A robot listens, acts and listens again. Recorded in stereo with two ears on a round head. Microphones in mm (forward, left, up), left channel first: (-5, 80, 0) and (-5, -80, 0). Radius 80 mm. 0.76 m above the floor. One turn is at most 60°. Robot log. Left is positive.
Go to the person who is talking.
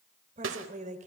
note: The woman speaking: about 40° right or 140° right.
cmd yaw -40
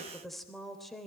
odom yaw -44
cmd fwd 1.0
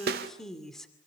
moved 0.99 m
cmd fwd 1.0
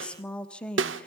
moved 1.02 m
cmd fwd 1.0
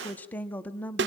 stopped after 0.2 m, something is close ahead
note: The woman speaking is now 10° left.
cmd yaw +10
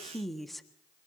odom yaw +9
end: Arrived at the woman speaking, straight ahead.